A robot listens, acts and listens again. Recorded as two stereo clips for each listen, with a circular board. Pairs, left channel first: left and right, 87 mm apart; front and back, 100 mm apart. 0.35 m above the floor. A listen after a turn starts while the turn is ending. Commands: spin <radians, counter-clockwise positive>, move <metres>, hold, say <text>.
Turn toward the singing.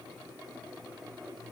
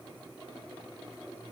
hold
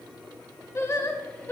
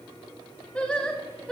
spin 1.40
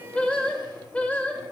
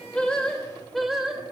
spin 1.92
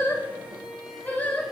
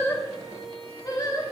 spin 0.52
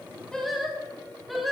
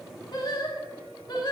say Facing the singing, 2 to 4 m away.